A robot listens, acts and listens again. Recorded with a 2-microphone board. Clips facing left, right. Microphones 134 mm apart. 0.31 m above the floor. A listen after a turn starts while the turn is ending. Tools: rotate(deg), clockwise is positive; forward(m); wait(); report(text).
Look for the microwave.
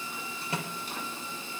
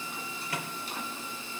rotate(-30)
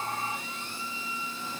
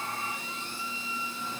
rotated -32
wait()
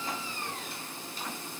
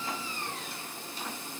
wait()
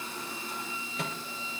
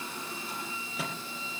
report("Found it: a microwave, straight ahead.")